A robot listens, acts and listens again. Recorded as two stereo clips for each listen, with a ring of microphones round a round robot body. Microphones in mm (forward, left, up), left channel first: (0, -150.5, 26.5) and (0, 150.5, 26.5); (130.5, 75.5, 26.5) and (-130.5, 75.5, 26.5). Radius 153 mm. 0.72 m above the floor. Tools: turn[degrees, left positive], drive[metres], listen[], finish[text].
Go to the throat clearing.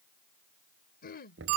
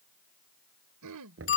Thought: The throat clearing: 150° right.
Action: turn[-150]
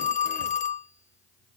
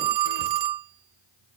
Action: listen[]
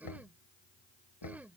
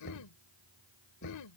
Action: drive[1.0]
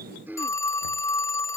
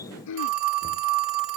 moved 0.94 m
Action: drive[1.0]
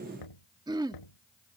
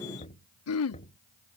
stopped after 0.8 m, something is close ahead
Thought: The throat clearing is now 15° left.
Action: turn[15]
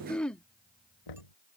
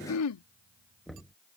Action: finish[Arrived at the throat clearing, straight ahead.]